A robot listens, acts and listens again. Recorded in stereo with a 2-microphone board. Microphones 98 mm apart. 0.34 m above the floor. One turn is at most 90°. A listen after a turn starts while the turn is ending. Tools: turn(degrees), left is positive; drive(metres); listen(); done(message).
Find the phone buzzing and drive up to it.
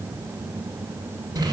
listen()
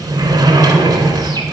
listen()
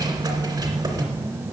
done("I can't make out a phone buzzing to turn to.")